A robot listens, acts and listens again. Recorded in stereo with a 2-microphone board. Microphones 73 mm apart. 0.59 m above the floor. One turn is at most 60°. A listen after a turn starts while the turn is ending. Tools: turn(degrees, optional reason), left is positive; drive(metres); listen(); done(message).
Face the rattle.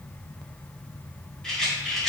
turn(degrees=30)
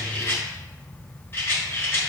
turn(degrees=60, reason="So it is at 145° left.")
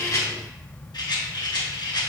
turn(degrees=60, reason="The rattle is now 95° left.")
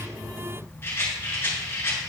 turn(degrees=35, reason="The rattle is now 35° left.")
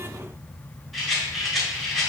done("Found it: a rattle, straight ahead.")